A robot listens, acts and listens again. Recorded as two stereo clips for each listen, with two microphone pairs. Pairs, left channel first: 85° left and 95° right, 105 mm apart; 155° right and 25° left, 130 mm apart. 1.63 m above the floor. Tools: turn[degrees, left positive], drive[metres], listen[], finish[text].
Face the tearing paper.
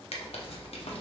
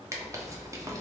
Thought: The tearing paper: 90° left.
Action: turn[90]
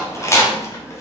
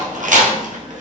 Thought: The tearing paper is now 20° left.
Action: turn[20]
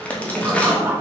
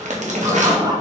Action: finish[Found it: tearing paper, straight ahead.]